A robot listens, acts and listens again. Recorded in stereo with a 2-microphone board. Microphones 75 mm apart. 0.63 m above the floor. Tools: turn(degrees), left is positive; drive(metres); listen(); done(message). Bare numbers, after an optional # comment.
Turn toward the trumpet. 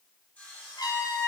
# The trumpet: about 65° left or 115° left.
turn(65)
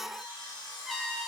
done("Found it: a trumpet, straight ahead, 2 to 4 m away.")